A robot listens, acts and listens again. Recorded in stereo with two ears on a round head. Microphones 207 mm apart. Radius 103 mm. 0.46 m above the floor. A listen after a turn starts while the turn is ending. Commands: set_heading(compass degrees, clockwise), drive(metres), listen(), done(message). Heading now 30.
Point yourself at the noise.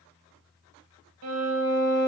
set_heading(100)
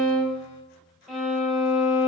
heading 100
done("Found it: a violin, straight ahead, under 1 m away.")